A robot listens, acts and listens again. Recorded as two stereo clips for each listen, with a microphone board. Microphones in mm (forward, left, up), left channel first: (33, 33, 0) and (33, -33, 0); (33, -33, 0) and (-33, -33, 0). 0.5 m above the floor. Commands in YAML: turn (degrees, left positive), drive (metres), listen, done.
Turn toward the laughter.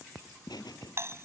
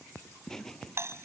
turn: 85
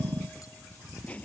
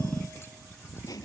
turn: 20
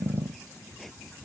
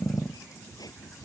done: "Found it: laughter, straight ahead."